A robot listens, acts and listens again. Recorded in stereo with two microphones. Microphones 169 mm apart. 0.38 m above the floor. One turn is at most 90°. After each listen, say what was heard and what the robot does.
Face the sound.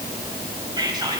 The whispering: about 25° right or 155° right. Turn 25° right.
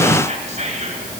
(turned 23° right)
So it is at 130° right. Turn 90° right.
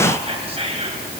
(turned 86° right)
The whispering is now 45° right. Turn 45° right.
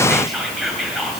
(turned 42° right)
Found it: whispering, straight ahead, 2 to 4 m away.